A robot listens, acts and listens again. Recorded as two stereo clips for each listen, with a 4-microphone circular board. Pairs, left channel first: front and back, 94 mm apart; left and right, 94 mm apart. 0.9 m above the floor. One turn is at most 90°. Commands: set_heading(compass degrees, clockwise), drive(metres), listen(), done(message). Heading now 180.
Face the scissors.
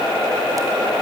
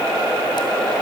listen()
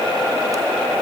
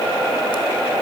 listen()
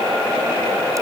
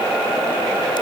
done("I can't make out scissors to turn to.")